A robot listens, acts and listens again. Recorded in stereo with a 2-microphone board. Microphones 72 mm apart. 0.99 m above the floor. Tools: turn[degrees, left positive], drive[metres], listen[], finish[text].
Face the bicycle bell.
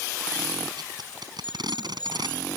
Thought: The bicycle bell: about 70° left or 110° left.
Action: turn[70]
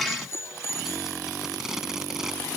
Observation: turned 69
Thought: So it is at 40° left.
Action: turn[40]
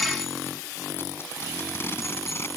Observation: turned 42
Action: listen[]
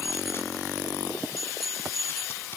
Action: finish[Facing the bicycle bell.]